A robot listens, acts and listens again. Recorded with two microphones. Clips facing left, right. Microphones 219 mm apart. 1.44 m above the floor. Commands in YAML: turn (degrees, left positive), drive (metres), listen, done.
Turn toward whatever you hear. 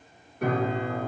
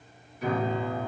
turn: 60
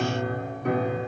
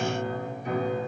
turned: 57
turn: 65
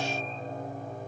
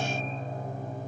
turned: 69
done: "Found it: a piano, straight ahead, under 1 m away."